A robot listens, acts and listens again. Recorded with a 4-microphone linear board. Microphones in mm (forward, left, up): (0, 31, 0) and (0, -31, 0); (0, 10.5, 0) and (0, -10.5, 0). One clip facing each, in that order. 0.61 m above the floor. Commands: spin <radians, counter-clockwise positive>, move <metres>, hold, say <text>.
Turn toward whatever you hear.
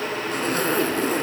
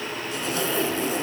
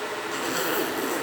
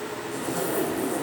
spin 0.87
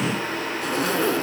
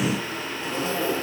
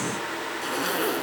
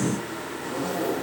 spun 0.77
spin 1.48
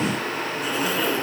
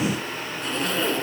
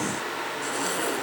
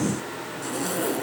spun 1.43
say Found it: a zipper, straight ahead, 2 to 4 m away.